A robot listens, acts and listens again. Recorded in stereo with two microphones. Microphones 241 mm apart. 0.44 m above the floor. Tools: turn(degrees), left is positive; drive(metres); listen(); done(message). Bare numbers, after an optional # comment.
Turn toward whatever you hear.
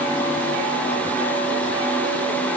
listen()
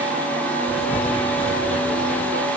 # The writing: about 25° left or 155° left.
turn(25)
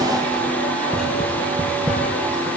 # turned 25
done("Facing the writing.")